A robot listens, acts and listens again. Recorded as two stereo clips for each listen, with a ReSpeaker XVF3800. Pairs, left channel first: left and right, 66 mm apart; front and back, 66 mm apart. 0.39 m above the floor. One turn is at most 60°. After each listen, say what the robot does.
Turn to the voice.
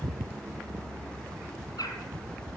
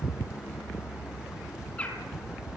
Keep listening.
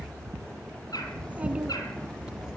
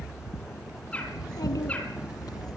Keep listening.
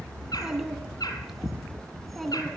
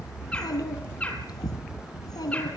Found it: a child speaking, straight ahead.